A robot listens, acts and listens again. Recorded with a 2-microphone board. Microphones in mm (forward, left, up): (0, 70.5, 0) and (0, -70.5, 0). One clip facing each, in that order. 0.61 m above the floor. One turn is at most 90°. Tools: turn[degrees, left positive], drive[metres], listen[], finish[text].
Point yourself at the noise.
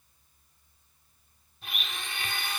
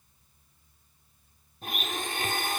Thought: The blender: about 45° right or 135° right.
Action: turn[-45]
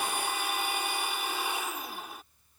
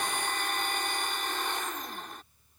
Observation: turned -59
Thought: So it is at 10° left.
Action: turn[10]
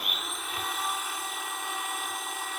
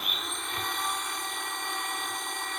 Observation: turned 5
Action: finish[Found it: a blender, straight ahead.]